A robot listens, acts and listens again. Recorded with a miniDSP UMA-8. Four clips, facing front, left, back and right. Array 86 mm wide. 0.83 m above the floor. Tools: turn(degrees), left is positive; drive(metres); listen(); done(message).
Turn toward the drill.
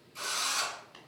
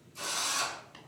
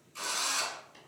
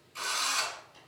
turn(degrees=-100)
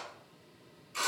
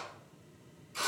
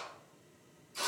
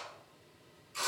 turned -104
done("Found it: a drill, straight ahead, 1 to 2 m away.")